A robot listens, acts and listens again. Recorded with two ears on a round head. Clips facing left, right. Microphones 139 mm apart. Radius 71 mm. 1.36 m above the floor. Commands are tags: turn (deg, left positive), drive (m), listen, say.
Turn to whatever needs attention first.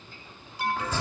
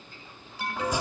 <turn deg="-90"/>
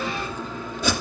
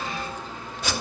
<listen/>
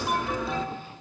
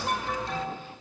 <say>Facing the alarm.</say>